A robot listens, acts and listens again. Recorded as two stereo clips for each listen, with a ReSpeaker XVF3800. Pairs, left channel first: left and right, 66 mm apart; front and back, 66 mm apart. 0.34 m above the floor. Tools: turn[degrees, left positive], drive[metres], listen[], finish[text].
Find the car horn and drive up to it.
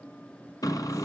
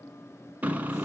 Thought: The car horn: 115° left.
Action: turn[115]
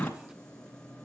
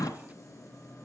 Thought: The car horn is now 25° left.
Action: turn[25]
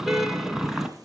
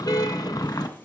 Action: drive[1.0]
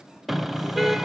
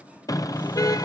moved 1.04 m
Action: drive[1.0]
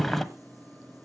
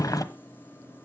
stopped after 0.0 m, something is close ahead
Action: finish[Arrived at the car horn, straight ahead.]